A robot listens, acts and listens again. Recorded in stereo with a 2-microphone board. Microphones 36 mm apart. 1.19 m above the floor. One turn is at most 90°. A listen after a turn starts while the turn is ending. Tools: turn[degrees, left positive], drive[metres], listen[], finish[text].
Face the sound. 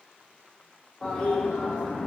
Thought: The toilet flushing: about 15° left or 165° left.
Action: turn[15]
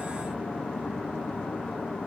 Thought: So it is at 150° left.
Action: turn[90]
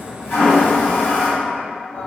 Thought: The toilet flushing is now 65° left.
Action: turn[65]
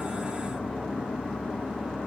Action: finish[Facing the toilet flushing, 1 to 2 m away.]